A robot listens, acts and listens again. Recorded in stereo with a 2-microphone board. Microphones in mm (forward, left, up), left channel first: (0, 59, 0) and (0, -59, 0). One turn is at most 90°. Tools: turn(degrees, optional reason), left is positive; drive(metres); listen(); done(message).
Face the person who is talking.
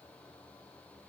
listen()
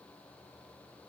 listen()
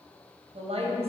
turn(degrees=-55, reason="The woman speaking: about 55° right or 125° right.")
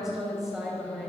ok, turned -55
done("Found it: a woman speaking, straight ahead.")